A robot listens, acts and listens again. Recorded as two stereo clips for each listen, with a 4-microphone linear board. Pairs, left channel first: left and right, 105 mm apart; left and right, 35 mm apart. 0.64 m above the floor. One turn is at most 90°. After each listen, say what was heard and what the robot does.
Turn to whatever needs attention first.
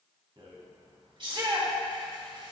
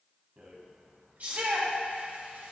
The shout: about 50° right or 130° right. Turn 50° right.
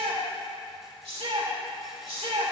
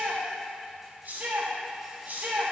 So it is at 75° right. Turn 75° right.
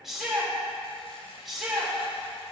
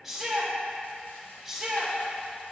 Facing the shout.